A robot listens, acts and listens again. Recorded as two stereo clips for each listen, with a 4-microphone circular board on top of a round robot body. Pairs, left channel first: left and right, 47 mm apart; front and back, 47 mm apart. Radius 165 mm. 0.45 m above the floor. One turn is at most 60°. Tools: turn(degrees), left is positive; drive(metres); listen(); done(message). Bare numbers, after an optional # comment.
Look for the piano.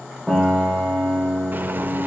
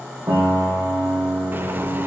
# The piano: 170° right.
turn(-60)
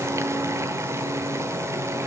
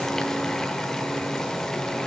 # Nothing new. It was at 110° right.
turn(-60)
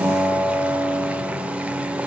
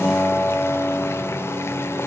# The piano is now 60° right.
turn(-60)
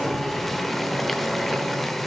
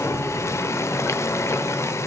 listen()
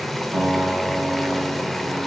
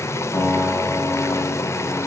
# The piano is now 30° right.
turn(-30)
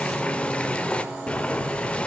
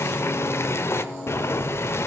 listen()
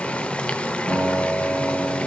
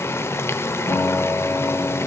done("Found it: a piano, straight ahead.")